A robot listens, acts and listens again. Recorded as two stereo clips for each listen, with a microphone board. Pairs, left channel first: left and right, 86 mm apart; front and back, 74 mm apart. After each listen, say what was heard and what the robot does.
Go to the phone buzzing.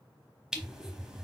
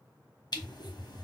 The phone buzzing: 100° right. Turn 100° right.
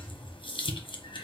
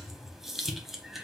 Drive 1.0 m forward.
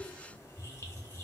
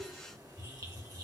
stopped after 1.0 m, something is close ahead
Arrived at the phone buzzing, straight ahead.